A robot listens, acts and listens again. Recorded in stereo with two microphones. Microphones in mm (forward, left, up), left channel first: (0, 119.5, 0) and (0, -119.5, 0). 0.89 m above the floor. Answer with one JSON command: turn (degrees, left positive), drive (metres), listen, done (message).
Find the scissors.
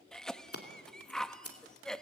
{"turn": 70}
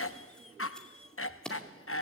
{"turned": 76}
{"done": "Found it: scissors, straight ahead, 2 to 4 m away."}